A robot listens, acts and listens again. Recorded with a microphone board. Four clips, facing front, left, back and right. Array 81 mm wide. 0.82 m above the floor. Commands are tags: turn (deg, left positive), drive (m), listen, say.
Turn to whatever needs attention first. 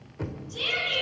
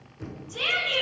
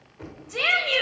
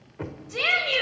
<turn deg="-145"/>
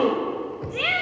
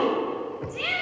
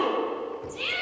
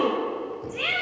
<say>Facing the shout.</say>